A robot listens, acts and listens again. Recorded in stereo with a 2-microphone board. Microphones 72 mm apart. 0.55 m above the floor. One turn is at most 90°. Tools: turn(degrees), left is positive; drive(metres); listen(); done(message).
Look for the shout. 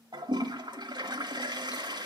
listen()
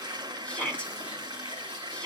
turn(degrees=15)
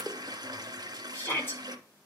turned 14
turn(degrees=90)
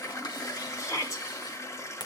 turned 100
turn(degrees=50)
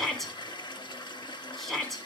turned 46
done("Found it: a shout, straight ahead.")